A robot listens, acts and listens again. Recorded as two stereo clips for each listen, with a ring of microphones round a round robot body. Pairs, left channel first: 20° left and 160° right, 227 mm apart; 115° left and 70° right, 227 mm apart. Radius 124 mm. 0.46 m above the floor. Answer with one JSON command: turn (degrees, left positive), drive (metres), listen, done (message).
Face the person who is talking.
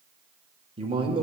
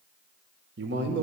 {"turn": -95}
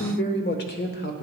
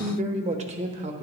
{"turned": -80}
{"turn": -10}
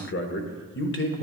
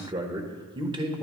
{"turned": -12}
{"done": "Facing the man speaking."}